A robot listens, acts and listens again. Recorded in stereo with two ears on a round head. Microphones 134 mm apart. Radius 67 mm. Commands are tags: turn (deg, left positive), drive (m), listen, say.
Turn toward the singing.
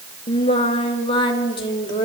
<turn deg="30"/>
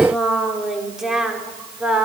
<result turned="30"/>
<say>Found it: singing, straight ahead, 2 to 4 m away.</say>